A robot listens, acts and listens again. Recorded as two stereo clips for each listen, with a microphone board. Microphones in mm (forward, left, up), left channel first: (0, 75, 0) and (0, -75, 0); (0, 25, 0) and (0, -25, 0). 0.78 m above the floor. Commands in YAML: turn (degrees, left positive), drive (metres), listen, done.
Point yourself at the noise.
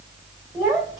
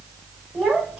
turn: -20
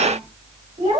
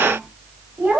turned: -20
turn: -130
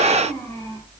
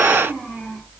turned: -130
turn: 15
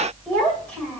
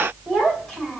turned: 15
turn: 10
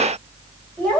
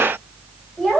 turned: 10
done: "Facing the child speaking."